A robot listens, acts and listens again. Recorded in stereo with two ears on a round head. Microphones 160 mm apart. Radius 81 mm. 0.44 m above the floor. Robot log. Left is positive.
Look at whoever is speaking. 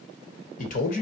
note: The man speaking: about 45° left or 135° left.
cmd yaw +45
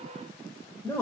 note: So it is at 15° left.
cmd yaw +15
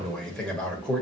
end: Found it: a man speaking, straight ahead, 1 to 2 m away.